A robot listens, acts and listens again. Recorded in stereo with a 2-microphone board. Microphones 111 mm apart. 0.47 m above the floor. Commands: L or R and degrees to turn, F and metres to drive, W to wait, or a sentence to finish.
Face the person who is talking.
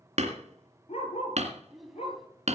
L30
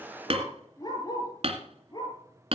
W
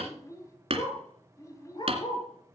L150
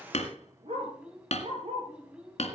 R10
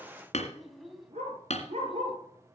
Facing the child speaking, 2 to 4 m away.